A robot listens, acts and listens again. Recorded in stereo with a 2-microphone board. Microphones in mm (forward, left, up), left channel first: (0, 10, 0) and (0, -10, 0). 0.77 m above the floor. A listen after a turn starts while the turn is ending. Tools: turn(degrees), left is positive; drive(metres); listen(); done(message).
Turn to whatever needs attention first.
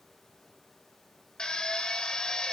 listen()
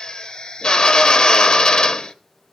listen()
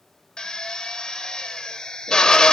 done("I can't make out anything urgent, only a drill.")